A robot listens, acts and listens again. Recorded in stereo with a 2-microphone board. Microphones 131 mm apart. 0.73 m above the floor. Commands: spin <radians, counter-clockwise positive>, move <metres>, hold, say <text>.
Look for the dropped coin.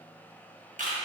hold
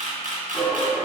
spin 0.44
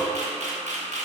hold
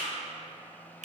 say I heard a dropped coin, but can't make it out now. It was about straight ahead or 130° left.